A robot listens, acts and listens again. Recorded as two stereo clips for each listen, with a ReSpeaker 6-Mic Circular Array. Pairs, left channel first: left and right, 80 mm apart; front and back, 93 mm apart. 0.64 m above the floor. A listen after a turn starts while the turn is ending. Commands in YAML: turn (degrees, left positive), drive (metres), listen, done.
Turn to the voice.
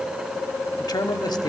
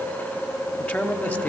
turn: 70
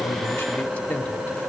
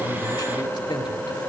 turn: 25
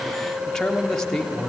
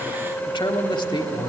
turn: 10
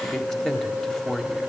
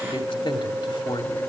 done: "Facing the man speaking."